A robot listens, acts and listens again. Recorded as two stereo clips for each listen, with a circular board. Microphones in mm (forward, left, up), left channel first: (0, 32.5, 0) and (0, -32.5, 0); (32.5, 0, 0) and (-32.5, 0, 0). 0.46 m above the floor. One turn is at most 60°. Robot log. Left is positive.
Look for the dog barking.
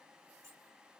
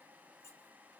cmd idle
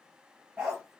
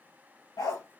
note: The dog barking: 20° right.
cmd yaw -20
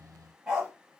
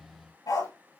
note: The dog barking is now 10° right.
cmd yaw -10
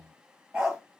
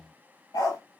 note: The dog barking is now 10° right.
cmd yaw -10
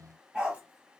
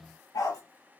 note: The dog barking is now 10° right.
cmd yaw -10
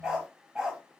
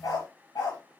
note: The dog barking is now 10° right.
cmd yaw -10
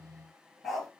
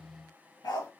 end: Found it: a dog barking, straight ahead, over 4 m away.